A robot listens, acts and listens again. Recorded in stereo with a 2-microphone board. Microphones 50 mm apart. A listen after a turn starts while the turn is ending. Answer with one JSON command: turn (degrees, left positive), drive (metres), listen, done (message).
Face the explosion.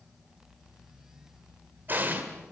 {"turn": -45}
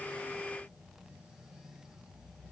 {"listen": true}
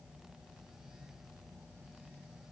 {"done": "I heard an explosion, but can't make it out now. It was about straight ahead or 90° right."}